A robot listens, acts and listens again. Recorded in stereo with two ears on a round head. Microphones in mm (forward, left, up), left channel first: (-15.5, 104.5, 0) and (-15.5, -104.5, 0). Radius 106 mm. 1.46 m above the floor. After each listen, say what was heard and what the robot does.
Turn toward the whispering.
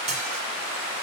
Keep listening.
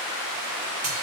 Keep listening.
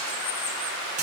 I can't make out whispering to turn to.